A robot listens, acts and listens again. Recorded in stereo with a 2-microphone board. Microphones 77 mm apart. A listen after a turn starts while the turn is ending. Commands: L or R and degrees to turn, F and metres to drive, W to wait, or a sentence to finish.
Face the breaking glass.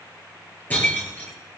L20
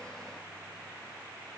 W
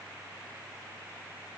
I heard breaking glass, but can't make it out now. It was about straight ahead or 140° left.